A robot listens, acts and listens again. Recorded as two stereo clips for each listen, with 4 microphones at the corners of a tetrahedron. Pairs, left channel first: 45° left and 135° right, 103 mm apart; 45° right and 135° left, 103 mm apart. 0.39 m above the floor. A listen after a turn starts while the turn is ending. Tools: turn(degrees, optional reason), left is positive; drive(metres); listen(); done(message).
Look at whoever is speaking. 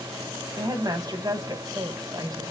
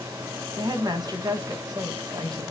turn(degrees=180, reason="The woman speaking: straight behind.")
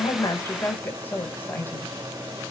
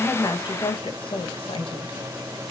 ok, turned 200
turn(degrees=-20, reason="The woman speaking is now 20° right.")
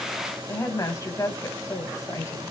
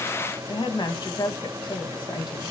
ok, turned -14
turn(degrees=-10, reason="The woman speaking is now 10° right.")
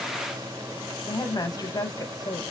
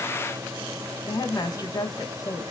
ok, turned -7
done("Found it: a woman speaking, straight ahead, 2 to 4 m away.")